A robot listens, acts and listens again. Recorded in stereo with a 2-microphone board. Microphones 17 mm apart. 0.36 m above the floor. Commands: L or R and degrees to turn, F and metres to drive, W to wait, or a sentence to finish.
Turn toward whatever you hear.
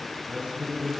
R90
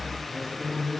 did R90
L10
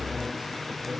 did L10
Facing the man speaking.